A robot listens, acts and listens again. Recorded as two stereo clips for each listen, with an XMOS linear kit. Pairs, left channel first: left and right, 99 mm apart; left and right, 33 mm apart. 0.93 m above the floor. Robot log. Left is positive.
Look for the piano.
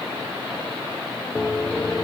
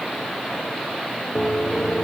note: The piano: about 20° left or 160° left.
cmd yaw +20
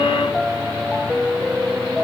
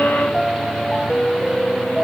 end: Found it: a piano, straight ahead.